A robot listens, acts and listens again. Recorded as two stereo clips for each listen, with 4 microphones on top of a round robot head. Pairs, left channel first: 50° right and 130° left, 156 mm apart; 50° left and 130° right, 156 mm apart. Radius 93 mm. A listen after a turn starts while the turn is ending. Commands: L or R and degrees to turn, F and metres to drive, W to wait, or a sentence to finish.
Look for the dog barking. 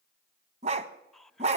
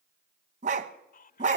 R175
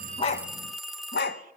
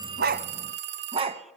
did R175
R75
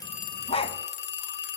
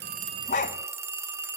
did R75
Facing the dog barking, 1 to 2 m away.